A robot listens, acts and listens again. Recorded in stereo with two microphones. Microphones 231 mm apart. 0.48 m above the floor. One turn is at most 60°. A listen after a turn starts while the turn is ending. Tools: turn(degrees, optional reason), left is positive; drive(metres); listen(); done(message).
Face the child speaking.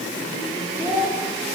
turn(degrees=30)
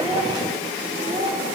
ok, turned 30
turn(degrees=-15, reason="So it is at 15° right.")
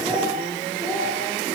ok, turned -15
done("Facing the child speaking.")